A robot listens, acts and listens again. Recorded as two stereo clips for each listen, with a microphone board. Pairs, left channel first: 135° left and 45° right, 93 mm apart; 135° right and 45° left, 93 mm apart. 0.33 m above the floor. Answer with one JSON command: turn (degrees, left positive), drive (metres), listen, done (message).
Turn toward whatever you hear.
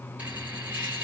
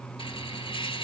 {"turn": -120}
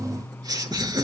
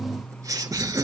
{"done": "Found it: laughter, straight ahead, over 4 m away."}